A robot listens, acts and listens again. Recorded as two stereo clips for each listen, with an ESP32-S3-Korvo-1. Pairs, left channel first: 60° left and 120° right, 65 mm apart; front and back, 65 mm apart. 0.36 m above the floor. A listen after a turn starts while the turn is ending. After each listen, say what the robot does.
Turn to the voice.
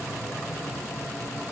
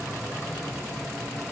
Keep listening.
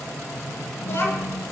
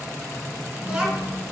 Turn 105° left.
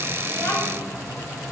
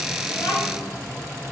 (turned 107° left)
Turn 10° left.
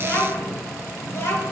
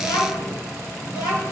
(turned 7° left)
Turn 15° left.
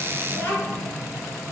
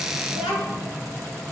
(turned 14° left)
Facing the child speaking.